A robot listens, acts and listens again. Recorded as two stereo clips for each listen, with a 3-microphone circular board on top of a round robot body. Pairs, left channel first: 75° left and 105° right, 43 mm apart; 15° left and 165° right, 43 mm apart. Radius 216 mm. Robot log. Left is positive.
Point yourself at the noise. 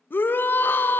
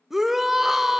note: The shout: 110° left.
cmd yaw +110
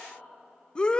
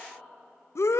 end: Found it: a shout, straight ahead.